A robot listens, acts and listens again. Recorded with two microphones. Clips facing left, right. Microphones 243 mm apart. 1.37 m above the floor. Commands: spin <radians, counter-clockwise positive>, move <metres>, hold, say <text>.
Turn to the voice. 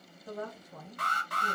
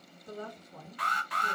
spin 1.57
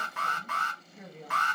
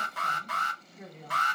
spin 0.17
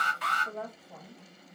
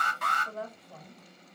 say Facing the woman speaking, 1 to 2 m away.